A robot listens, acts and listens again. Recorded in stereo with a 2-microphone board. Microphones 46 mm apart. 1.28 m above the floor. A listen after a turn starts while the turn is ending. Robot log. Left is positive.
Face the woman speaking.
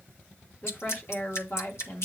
note: The woman speaking: about 65° left or 115° left.
cmd yaw +65
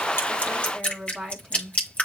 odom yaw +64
note: So it is at 10° left.
cmd yaw +10
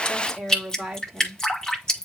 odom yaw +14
end: Found it: a woman speaking, straight ahead, 2 to 4 m away.